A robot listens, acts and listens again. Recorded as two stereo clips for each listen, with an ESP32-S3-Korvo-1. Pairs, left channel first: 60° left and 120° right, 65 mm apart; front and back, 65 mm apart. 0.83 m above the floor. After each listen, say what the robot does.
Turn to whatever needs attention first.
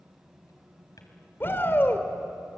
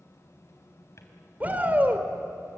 Turn 115° left.
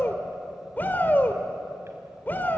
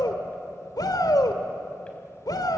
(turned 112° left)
Found it: a shout, straight ahead, 2 to 4 m away.